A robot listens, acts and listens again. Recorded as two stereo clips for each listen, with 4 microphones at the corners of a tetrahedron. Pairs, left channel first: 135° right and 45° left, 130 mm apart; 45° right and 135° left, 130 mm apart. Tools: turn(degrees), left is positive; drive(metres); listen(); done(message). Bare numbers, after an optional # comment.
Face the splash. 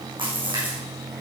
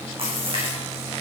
# The splash: 90° left.
turn(90)
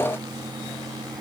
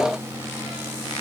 done("I heard a splash from this way, but can't make it out now.")